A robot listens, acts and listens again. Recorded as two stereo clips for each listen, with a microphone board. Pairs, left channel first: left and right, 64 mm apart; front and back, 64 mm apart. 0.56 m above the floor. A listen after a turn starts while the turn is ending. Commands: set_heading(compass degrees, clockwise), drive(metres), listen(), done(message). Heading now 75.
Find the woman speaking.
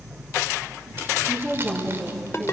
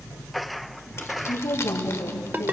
done("Facing the woman speaking, over 4 m away.")